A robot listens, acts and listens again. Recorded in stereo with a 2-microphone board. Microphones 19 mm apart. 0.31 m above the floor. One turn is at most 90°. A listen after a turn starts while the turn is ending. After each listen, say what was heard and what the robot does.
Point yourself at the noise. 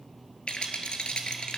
The rattle: about 70° left or 110° left. Turn 70° left.
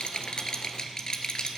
So it is at 40° left. Turn 40° left.
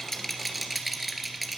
Found it: a rattle, straight ahead.